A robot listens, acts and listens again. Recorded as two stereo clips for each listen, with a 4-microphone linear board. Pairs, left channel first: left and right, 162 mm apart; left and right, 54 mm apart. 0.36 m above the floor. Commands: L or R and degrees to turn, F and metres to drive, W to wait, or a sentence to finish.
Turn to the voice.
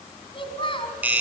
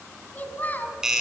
L35
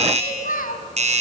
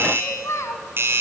L110
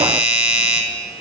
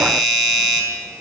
W
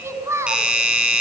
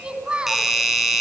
R20
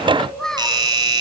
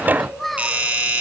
Facing the child speaking, 2 to 4 m away.